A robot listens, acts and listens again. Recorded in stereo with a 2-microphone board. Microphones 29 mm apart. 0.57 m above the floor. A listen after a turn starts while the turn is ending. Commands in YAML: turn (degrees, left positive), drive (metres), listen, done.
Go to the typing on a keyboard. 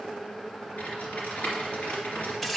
turn: 60
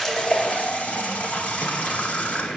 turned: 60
listen: true
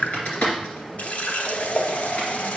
turn: 55
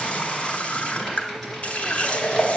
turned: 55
drive: 1.0
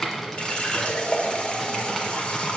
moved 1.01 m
turn: 10
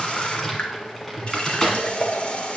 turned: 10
drive: 1.0
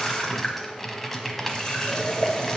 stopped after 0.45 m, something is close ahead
turn: 10
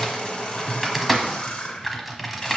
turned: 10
done: "I am next to the typing on a keyboard."